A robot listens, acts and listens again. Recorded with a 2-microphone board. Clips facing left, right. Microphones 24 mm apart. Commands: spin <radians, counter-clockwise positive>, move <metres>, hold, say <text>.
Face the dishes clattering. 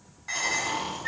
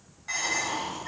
spin 0.52
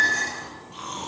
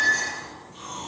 hold
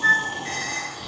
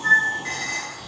spin -0.35
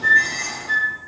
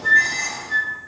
hold
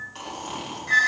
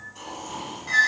hold
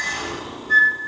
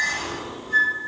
say I heard dishes clattering from this way, but can't make it out now.